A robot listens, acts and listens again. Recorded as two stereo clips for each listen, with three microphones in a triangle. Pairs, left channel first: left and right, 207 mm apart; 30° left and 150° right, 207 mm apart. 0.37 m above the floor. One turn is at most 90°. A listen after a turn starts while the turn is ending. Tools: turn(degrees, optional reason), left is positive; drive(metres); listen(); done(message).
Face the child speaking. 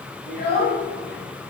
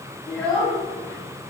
turn(degrees=90, reason="The child speaking: 110° left.")
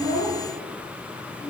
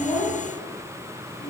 turn(degrees=25, reason="The child speaking is now 25° left.")
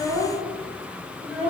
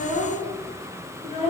turn(degrees=-15, reason="The child speaking is now 15° right.")
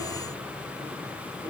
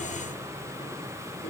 turn(degrees=-20, reason="The child speaking is now 20° right.")
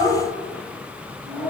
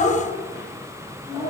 turn(degrees=-10, reason="The child speaking is now 10° right.")
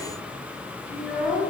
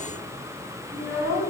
done("Found it: a child speaking, straight ahead.")